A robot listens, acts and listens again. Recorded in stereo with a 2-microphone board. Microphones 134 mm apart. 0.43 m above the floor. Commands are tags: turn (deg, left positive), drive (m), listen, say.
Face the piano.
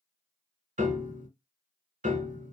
<turn deg="-70"/>
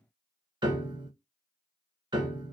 <turn deg="-35"/>
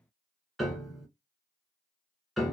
<say>Found it: a piano, straight ahead, under 1 m away.</say>